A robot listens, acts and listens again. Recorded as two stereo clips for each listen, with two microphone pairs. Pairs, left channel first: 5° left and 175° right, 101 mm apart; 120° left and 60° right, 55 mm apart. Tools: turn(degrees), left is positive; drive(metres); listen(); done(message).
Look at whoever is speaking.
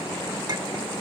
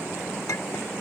listen()
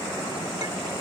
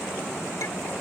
listen()
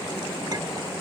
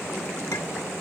done("I can't make out anyone speaking.")